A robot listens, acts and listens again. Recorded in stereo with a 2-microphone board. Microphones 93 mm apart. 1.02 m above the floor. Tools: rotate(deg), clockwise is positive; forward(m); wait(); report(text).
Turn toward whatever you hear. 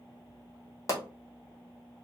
rotate(-35)
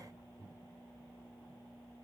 wait()
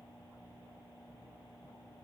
report("I heard a pop, but can't make it out now. It was about straight ahead or 110° left.")